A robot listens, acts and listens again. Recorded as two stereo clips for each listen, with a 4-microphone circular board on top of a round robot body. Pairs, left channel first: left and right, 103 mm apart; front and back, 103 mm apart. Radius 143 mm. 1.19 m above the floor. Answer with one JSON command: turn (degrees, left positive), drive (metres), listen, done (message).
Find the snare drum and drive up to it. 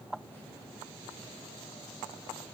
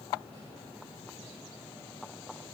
{"listen": true}
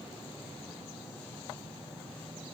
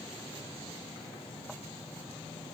{"listen": true}
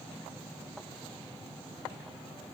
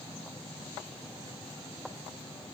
{"done": "I can't make out a snare drum."}